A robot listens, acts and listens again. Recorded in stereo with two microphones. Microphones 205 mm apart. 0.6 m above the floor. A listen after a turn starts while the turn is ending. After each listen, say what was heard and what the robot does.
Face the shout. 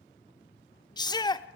The shout: about 20° left or 160° left. Turn 20° left.
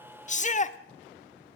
So it is at 140° left. Turn 140° left.
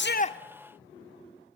Keep listening.
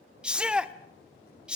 Facing the shout, 1 to 2 m away.